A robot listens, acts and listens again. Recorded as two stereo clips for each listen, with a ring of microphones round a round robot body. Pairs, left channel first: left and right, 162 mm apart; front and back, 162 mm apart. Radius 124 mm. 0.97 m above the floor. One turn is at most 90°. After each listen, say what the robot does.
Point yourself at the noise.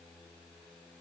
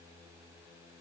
Keep listening.
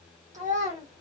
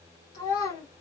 Turn 45° right.
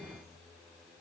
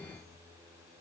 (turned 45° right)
Keep listening.
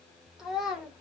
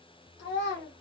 Found it: a child speaking, straight ahead.